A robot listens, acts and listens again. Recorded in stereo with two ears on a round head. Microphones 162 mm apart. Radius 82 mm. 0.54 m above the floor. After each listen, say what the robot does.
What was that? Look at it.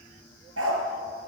Turn 90° right.
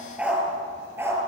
Turn 15° right.
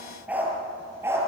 Turn 15° right.
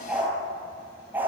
Turn 10° right.
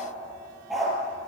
Facing the dog barking.